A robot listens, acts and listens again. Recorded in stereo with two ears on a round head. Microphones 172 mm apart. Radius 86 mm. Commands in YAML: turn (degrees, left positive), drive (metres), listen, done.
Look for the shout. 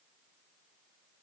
listen: true
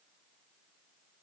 listen: true
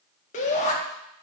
turn: 40
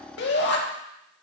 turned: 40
turn: 95
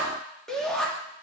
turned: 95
done: "Facing the shout."